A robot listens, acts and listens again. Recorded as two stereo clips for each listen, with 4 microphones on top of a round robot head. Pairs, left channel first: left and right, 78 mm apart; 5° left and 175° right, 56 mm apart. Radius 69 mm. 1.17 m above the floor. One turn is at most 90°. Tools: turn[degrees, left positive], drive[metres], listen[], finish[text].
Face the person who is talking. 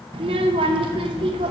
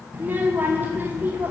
Thought: The child speaking: 105° right.
Action: turn[-90]
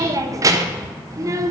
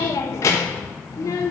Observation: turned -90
Thought: The child speaking is now 40° right.
Action: turn[-40]
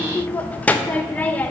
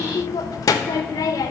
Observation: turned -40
Thought: The child speaking is now 20° left.
Action: turn[20]
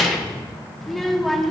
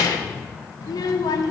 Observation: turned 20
Action: finish[Found it: a child speaking, straight ahead, under 1 m away.]